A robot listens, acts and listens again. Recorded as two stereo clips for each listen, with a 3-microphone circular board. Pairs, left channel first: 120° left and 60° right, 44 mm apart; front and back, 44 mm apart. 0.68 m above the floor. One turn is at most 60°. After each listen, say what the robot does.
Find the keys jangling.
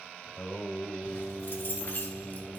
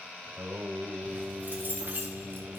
Turn 60° left.
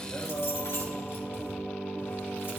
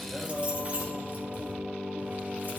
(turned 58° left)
Turn 60° left.
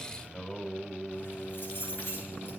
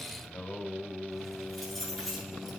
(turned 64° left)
Turn 60° left.
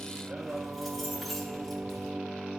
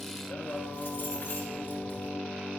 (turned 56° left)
Turn 30° left.
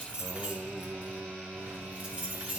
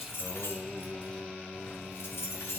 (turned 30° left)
Found it: keys jangling, straight ahead.